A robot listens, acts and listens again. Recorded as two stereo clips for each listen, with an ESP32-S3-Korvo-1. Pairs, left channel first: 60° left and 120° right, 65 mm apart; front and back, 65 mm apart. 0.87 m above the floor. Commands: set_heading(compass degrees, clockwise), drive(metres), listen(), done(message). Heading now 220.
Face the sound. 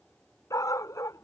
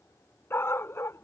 set_heading(180)
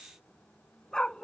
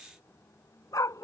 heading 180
set_heading(200)
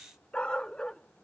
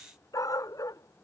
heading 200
set_heading(215)
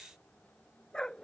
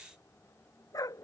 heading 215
set_heading(235)
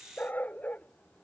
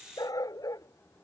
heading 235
done("Facing the dog barking.")